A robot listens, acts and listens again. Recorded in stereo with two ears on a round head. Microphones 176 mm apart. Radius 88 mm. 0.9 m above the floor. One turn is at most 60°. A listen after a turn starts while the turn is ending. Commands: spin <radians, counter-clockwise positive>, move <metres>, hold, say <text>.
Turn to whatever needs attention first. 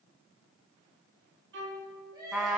spin -0.35
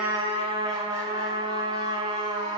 hold
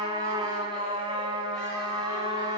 hold
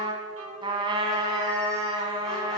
say I heard crying, but can't make it out now. It was about straight ahead or 140° right.